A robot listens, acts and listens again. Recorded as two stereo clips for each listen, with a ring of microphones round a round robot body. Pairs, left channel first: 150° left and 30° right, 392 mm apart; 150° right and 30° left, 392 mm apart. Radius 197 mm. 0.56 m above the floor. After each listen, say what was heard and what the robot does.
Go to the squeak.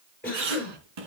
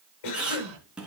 The squeak: 55° right. Turn 55° right.
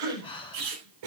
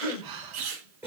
The squeak is now 10° left. Turn 10° left.
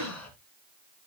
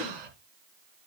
Keep listening.
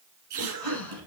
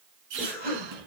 Drive 1.0 m forward.
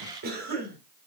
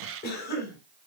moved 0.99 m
Keep listening.
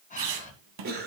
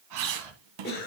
Drive 1.0 m forward.
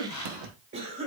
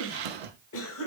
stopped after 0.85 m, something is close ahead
Arrived at the squeak, straight ahead.